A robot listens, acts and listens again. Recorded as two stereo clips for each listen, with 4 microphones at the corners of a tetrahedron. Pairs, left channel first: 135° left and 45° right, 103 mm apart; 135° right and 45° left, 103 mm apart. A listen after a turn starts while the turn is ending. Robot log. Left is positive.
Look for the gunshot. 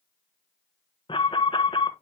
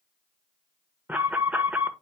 cmd idle
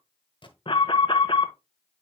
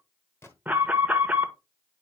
note: The gunshot: 160° left.
cmd yaw +160
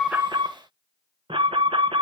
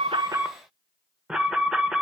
end: Facing where the gunshot came from. I can't hear it now.